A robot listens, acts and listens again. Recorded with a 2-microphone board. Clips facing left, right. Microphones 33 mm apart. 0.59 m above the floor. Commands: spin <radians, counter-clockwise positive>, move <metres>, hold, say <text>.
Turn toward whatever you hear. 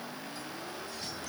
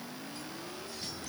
hold
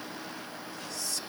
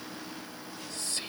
spin -0.87
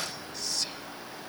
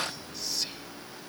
say Found it: whispering, straight ahead.